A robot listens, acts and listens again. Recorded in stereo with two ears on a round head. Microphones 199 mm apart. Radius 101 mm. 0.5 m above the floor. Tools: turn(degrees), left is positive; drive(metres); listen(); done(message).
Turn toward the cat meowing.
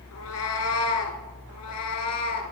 turn(degrees=90)
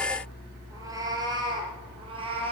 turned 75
turn(degrees=-25)
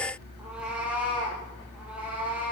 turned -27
done("Facing the cat meowing.")